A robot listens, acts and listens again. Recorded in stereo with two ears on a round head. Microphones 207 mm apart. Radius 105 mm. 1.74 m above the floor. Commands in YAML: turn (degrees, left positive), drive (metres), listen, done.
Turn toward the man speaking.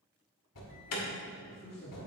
turn: 45
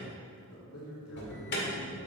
turn: 70
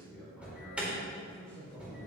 done: "Facing the man speaking, 2 to 4 m away."